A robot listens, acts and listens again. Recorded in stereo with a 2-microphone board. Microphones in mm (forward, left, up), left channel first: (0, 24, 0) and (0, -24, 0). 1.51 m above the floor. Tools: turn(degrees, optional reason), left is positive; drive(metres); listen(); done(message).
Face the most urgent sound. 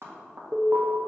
turn(degrees=-40, reason="The alarm: about 40° right or 140° right.")
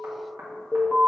done("Facing the alarm.")